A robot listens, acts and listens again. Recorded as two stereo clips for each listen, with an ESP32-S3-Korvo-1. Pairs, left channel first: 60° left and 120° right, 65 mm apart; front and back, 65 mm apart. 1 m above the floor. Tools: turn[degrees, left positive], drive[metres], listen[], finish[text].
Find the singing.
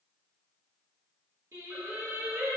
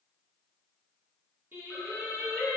Thought: The singing: 145° right.
Action: turn[-145]
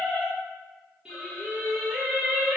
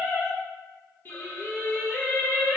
Thought: The singing is now 70° right.
Action: turn[-70]
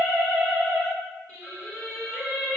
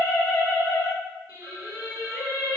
Thought: The singing is now 20° right.
Action: turn[-20]
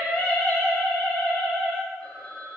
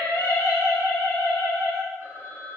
Action: finish[Facing the singing.]